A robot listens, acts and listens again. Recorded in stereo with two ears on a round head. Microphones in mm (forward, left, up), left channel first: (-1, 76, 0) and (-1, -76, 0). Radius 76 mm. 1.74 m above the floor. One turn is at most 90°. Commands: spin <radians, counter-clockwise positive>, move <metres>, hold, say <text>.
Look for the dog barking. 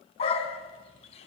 spin 0.61
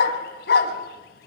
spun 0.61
spin 1.57
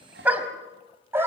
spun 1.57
spin -0.26
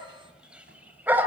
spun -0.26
spin -0.17
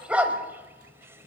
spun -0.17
spin -0.17
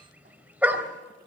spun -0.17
spin -0.17
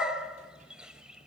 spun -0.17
say Facing the dog barking, 2 to 4 m away.